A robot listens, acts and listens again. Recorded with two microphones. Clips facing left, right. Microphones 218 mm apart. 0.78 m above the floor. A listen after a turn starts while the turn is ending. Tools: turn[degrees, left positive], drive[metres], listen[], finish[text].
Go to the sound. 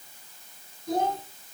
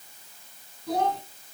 Action: turn[-90]
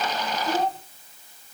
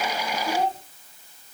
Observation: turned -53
Thought: So it is at 25° right.
Action: turn[-25]
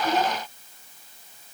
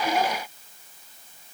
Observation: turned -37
Thought: Nothing new. It was at 10° left.
Action: turn[10]
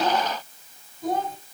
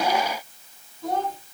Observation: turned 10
Action: drive[1.0]
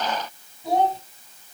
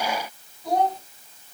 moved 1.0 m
Action: drive[1.0]
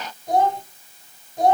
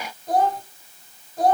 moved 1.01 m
Action: drive[1.0]
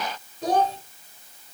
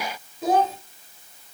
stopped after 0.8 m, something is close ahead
Action: finish[Arrived at the child speaking, straight ahead.]